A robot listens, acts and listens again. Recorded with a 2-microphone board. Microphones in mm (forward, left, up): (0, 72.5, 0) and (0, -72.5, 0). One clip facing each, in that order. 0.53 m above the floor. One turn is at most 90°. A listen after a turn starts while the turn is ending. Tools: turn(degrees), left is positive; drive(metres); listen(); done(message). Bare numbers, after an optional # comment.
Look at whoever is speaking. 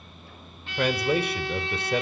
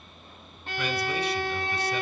# The man speaking: about 55° left or 125° left.
turn(55)
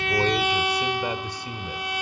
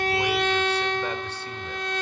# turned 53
listen()
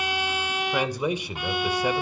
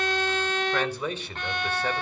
# So it is at 15° left.
turn(15)
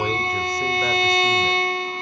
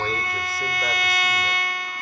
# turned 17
listen()
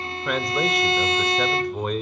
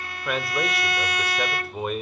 done("Found it: a man speaking, straight ahead.")